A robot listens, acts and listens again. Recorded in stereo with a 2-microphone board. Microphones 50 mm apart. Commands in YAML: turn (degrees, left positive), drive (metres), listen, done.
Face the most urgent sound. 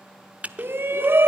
turn: -50
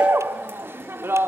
turn: -65
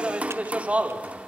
turn: -30
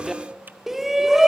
turn: -10
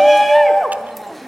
done: "Facing the shout, 1 to 2 m away."